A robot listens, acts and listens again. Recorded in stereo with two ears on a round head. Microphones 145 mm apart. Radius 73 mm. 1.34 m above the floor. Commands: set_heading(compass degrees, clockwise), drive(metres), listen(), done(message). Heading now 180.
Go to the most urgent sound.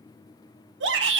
set_heading(270)
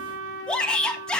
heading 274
drive(1.0)
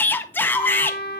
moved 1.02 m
set_heading(259)
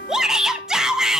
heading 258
drive(1.0)
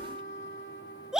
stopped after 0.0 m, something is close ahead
done("I am next to the shout.")